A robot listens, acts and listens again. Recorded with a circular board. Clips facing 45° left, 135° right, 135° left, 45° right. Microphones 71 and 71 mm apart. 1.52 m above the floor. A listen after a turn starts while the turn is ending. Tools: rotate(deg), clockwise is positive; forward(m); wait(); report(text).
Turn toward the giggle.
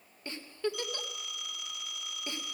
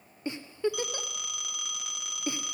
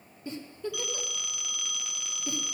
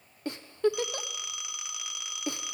rotate(60)
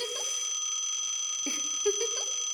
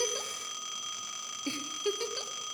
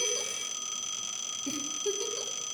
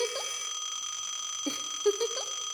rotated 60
rotate(30)
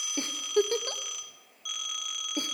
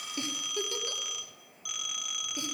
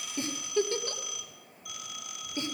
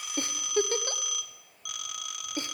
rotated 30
report("Facing the giggle.")